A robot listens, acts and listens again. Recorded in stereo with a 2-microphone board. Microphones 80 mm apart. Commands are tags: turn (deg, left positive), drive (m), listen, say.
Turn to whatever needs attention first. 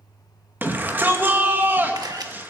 <turn deg="-25"/>
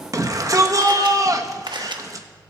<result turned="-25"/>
<turn deg="-130"/>
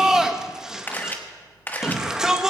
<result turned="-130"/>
<turn deg="-10"/>
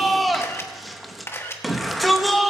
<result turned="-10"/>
<say>Found it: a shout, straight ahead.</say>